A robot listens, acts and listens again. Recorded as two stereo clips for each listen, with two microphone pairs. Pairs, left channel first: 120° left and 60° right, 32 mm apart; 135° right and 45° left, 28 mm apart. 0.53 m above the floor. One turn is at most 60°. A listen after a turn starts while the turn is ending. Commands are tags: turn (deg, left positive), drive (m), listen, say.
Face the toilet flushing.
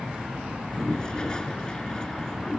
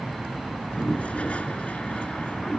<turn deg="-60"/>
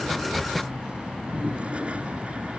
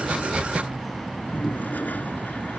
<turn deg="-60"/>
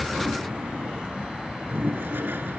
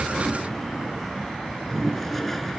<turn deg="-50"/>
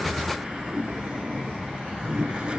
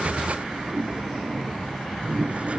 <say>Found it: a toilet flushing, straight ahead.</say>